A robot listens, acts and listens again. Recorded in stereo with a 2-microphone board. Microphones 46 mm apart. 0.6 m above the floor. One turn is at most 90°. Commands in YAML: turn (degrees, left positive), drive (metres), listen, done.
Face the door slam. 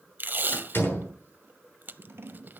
turn: 50
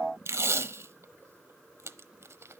listen: true
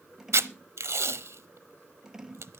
done: "I heard a door slam, but can't make it out now. It was about straight ahead or 80° left."